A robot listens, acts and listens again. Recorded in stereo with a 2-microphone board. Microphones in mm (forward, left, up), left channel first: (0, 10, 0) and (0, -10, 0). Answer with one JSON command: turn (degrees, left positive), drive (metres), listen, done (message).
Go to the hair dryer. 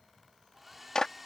{"turn": -30}
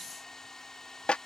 {"turn": 20}
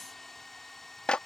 {"turn": 10}
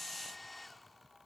{"drive": 1.0}
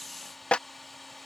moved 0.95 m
{"drive": 1.0}
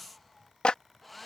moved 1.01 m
{"drive": 1.0}
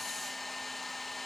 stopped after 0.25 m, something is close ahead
{"turn": 10}
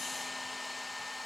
{"done": "I am next to the hair dryer."}